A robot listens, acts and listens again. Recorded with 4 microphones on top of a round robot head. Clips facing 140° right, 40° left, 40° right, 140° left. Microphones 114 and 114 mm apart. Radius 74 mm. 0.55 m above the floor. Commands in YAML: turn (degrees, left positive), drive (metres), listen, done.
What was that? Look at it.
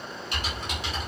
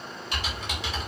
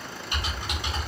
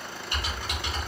turn: 35
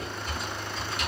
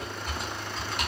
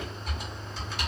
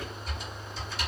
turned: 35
done: "Facing the typing on a keyboard, 1 to 2 m away."